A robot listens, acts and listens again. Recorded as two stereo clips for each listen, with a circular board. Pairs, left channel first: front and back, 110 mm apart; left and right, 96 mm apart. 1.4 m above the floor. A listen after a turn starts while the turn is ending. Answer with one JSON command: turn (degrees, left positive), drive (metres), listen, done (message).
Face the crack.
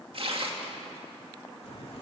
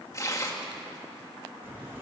{"turn": -20}
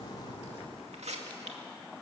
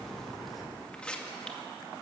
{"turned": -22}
{"done": "Facing the crack, 2 to 4 m away."}